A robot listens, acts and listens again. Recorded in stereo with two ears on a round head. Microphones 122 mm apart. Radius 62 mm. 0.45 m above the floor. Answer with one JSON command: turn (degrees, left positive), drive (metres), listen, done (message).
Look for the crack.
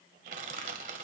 {"listen": true}
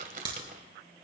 {"turn": -35}
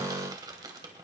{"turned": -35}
{"listen": true}
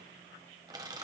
{"done": "I heard a crack, but can't make it out now. It was about straight ahead or 110° right."}